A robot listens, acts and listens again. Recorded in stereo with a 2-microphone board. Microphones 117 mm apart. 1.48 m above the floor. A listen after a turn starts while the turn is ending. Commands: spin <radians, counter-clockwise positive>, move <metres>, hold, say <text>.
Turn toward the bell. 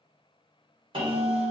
spin -0.79
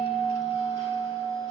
spin -1.48
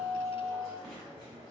say Found it: a bell, straight ahead.